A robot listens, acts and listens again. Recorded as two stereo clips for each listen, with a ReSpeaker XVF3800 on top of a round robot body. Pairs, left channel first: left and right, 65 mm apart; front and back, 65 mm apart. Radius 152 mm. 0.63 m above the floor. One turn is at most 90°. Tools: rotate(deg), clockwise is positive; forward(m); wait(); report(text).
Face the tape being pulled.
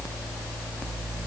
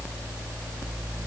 wait()
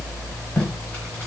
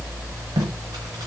rotate(-90)
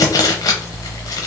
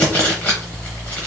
rotate(-70)
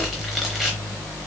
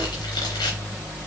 wait()
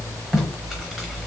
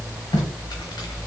report("Found it: tape being pulled, straight ahead.")